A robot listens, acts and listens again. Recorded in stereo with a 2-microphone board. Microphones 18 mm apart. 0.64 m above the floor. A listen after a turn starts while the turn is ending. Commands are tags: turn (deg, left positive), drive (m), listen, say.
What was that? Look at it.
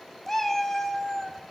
<turn deg="20"/>
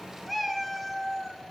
<say>Facing the cat meowing.</say>